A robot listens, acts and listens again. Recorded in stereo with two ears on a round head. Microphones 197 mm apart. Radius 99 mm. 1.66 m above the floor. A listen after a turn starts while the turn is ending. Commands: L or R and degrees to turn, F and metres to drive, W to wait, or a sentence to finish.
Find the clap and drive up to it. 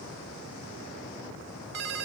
W
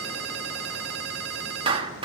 R25
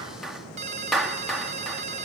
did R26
F1.0
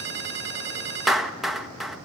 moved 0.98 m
F1.0
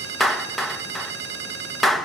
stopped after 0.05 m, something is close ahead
I am next to the clap.